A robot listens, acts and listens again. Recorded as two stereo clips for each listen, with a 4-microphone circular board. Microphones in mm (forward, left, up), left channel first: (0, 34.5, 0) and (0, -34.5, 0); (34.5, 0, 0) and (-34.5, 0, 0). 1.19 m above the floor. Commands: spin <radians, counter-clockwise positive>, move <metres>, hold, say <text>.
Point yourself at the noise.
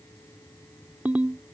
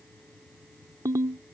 spin -2.71
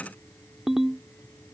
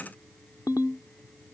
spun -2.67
say Found it: a ringtone, straight ahead.